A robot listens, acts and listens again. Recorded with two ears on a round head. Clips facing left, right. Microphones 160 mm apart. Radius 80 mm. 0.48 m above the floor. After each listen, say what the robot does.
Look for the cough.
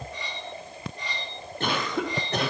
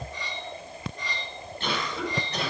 Turn 40° left.
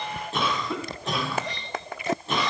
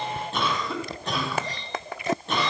Found it: a cough, straight ahead, 2 to 4 m away.